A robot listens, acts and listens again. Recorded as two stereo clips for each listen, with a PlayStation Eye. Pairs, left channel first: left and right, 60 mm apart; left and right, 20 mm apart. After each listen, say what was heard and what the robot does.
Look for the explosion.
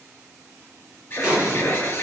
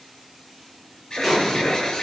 Turn 30° right.
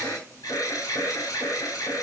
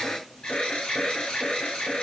Keep listening.
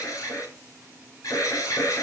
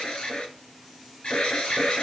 I heard an explosion, but can't make it out now. It was about 25° left or 145° right.